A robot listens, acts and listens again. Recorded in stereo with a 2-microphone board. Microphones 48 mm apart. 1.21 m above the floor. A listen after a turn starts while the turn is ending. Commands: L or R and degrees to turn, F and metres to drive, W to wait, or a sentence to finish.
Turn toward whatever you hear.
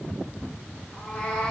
L20
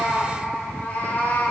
L40
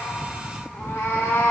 L115
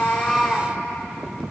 Facing the cat meowing, 1 to 2 m away.